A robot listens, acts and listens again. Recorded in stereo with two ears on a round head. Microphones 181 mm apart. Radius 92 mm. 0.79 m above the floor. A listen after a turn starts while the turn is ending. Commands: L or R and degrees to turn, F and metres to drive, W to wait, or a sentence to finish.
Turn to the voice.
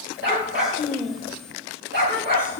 L30
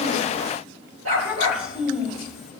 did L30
Found it: a child speaking, straight ahead.